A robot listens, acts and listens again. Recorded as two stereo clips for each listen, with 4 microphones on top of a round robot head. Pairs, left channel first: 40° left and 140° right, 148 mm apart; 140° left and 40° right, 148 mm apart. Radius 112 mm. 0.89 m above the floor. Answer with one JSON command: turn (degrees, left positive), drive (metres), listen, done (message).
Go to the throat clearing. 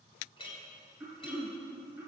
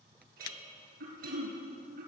{"turn": -55}
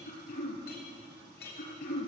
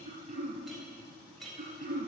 {"turn": 10}
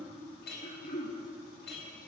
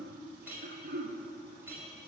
{"drive": 1.0}
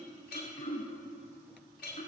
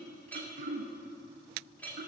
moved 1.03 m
{"drive": 1.0}
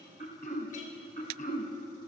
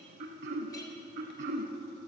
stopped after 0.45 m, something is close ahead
{"done": "I am next to the throat clearing."}